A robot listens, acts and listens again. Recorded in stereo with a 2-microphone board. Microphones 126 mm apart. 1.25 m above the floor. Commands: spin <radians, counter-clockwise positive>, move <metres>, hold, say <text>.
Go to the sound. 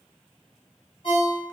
spin 0.87
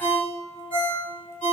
spin 1.40
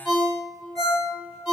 move 1.0
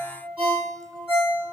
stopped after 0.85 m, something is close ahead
spin -0.17
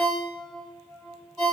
say I am next to the ringtone.